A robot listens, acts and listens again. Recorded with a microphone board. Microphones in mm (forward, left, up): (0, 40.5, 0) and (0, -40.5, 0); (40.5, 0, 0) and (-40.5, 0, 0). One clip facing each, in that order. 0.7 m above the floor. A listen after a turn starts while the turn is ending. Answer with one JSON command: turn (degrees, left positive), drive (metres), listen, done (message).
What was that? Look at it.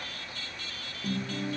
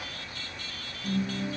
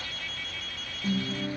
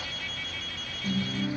{"turn": 55}
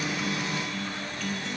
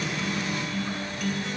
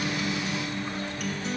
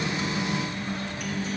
{"turn": -20}
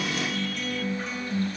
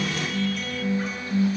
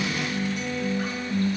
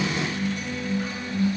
{"done": "Facing the guitar."}